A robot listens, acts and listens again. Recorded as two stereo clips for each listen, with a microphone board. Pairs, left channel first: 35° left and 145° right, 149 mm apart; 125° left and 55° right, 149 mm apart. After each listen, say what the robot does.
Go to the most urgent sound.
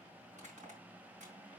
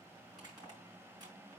Keep listening.
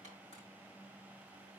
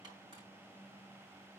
Keep listening.
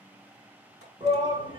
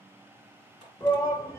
Turn 170° right.
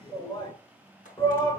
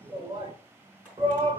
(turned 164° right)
Turn 10° right.
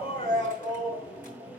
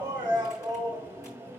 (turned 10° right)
Drive 1.0 m forward.
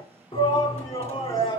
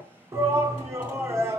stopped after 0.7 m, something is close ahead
Turn 10° left.
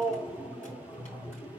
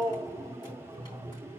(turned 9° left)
Arrived at the shout, straight ahead.